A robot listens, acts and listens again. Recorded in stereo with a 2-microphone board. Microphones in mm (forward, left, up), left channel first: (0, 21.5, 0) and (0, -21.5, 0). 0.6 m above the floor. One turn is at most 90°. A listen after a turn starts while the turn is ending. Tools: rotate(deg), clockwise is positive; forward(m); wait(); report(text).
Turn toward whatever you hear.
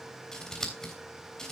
rotate(-30)
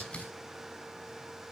wait()
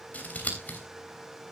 rotate(-90)
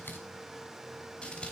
rotate(-30)
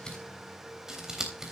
rotate(15)
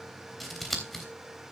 report("Found it: scissors, straight ahead.")